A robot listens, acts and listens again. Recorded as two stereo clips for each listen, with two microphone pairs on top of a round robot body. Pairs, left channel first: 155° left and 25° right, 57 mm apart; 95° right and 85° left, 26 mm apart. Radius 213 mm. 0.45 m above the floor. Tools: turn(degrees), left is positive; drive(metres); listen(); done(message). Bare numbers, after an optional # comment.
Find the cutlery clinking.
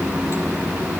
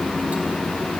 listen()
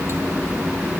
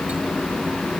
listen()
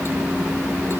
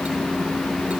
done("I can't make out cutlery clinking.")